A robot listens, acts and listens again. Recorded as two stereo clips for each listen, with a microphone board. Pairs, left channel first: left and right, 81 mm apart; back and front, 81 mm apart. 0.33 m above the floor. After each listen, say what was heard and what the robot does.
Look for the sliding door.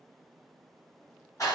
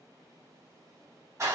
Keep listening.
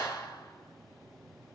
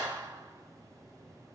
Keep listening.
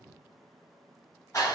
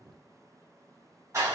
I can't make out a sliding door to turn to.